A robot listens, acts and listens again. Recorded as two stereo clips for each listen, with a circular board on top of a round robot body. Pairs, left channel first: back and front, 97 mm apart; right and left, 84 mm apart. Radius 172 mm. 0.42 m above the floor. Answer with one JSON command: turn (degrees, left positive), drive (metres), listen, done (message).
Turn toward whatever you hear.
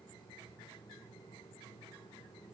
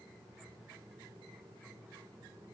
{"listen": true}
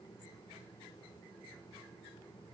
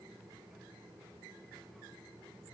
{"listen": true}
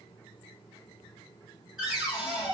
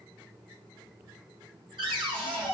{"turn": 85}
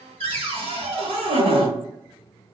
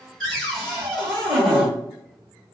{"done": "Facing the cupboard door."}